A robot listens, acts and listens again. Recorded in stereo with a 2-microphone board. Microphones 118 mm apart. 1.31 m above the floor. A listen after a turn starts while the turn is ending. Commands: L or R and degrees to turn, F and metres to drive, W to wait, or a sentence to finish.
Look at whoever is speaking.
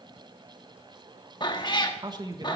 R35
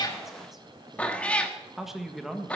Facing the man speaking, 1 to 2 m away.